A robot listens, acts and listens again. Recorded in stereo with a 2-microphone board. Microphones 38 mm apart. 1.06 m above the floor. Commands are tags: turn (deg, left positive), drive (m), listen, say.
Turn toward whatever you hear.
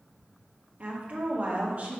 <turn deg="-40"/>
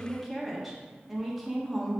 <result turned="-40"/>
<say>Facing the woman speaking.</say>